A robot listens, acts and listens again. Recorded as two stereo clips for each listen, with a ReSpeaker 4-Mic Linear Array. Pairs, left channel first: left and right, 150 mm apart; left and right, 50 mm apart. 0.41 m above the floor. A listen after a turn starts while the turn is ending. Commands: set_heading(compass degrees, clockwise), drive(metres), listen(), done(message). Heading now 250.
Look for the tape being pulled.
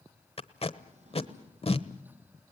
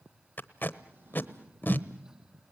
set_heading(210)
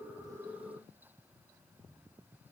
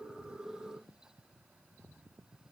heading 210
listen()
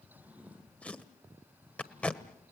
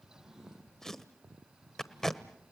set_heading(200)
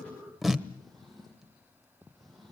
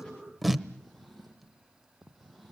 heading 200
done("Facing the tape being pulled.")